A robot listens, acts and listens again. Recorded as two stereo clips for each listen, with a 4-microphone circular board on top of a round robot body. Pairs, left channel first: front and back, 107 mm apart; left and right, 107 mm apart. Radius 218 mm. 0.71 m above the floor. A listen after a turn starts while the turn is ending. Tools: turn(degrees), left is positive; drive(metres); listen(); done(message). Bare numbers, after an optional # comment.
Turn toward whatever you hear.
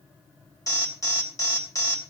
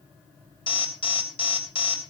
# The alarm: 60° left.
turn(60)
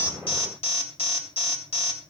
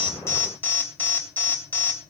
# The alarm is now 20° left.
turn(20)
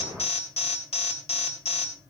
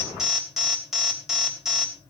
done("Facing the alarm.")